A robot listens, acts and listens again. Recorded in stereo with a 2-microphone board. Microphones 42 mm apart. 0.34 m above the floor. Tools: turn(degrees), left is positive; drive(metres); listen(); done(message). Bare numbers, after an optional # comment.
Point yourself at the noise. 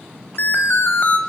# The alarm: about 50° left or 130° left.
turn(50)
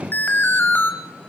# So it is at 65° left.
turn(65)
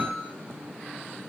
listen()
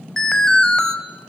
# The alarm is now 15° left.
turn(15)
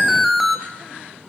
done("Found it: an alarm, straight ahead.")